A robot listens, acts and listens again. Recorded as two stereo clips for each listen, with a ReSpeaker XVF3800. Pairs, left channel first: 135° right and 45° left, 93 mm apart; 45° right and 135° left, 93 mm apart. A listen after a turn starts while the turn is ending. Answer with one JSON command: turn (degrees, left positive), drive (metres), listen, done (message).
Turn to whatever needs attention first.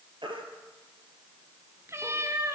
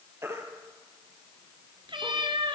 {"turn": 75}
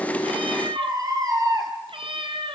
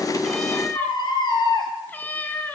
{"done": "Found it: a baby crying, straight ahead, 2 to 4 m away."}